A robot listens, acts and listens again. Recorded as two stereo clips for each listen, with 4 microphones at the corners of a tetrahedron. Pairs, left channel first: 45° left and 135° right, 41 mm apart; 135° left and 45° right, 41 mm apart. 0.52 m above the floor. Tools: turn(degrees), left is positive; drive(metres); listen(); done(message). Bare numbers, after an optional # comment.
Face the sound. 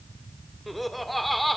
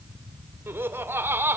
# The laughter: 45° right.
turn(-45)
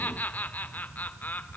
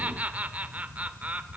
done("Facing the laughter.")